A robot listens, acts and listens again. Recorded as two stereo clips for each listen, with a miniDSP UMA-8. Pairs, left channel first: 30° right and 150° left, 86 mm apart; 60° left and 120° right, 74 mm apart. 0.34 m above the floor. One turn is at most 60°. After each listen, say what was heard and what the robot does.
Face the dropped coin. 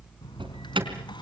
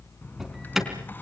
Facing the dropped coin.